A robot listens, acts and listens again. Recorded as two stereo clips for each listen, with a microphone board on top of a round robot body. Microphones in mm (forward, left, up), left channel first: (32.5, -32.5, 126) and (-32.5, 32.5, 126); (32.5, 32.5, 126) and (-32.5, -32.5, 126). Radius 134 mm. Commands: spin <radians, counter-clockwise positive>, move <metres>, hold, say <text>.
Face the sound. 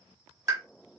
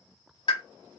spin 1.40
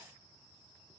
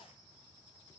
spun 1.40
say Facing where the pop came from. I can't hear it now.